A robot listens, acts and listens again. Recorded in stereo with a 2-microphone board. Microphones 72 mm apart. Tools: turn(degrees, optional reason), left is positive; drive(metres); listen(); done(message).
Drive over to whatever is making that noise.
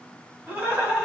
turn(degrees=-30)
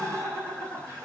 turn(degrees=-135, reason="So it is at 135° right.")
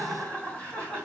turn(degrees=15, reason="The laughter is now 15° left.")
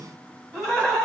drive(metres=1.0)
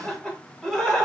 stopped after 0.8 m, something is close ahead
done("Arrived at the laughter, straight ahead.")